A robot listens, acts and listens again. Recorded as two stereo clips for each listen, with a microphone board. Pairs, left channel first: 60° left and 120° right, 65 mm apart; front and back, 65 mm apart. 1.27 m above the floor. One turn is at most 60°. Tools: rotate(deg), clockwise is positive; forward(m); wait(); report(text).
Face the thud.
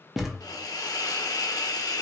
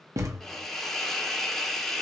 rotate(-60)
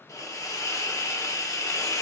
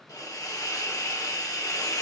rotate(-60)
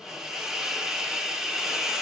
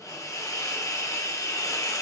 rotate(-35)
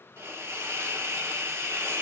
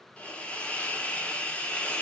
report("I heard a thud from this way, but can't make it out now.")